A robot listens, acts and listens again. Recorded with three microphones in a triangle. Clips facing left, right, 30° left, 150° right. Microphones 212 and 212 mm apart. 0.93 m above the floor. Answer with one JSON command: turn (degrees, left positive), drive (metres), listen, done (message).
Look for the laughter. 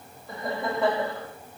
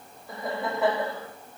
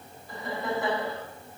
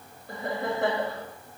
{"turn": -175}
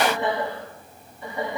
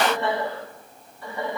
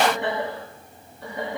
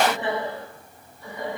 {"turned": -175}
{"turn": 20}
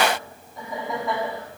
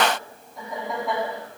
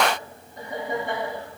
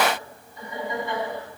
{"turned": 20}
{"done": "Facing the laughter."}